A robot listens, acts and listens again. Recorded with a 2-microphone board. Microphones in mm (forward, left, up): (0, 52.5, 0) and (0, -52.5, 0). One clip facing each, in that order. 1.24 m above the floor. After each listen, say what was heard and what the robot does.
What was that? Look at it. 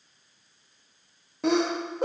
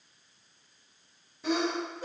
Turn 90° left.
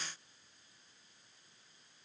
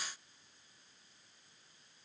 I heard a sneeze from this way, but can't make it out now.